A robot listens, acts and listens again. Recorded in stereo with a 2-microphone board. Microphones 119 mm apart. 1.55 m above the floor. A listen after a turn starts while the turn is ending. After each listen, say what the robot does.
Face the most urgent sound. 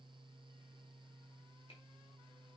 Keep listening.
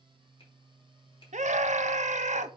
Turn 90° right.
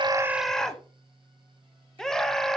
Facing the scream, under 1 m away.